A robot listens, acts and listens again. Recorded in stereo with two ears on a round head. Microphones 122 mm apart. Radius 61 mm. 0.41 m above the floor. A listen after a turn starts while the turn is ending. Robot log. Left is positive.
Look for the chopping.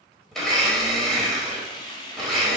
cmd idle
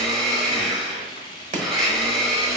note: The chopping: about 50° right or 130° right.
cmd yaw -50
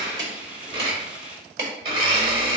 note: So it is at 60° right.
cmd yaw -60
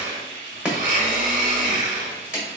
note: The chopping is now 10° right.
cmd yaw -10
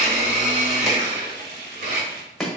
end: Found it: chopping, straight ahead.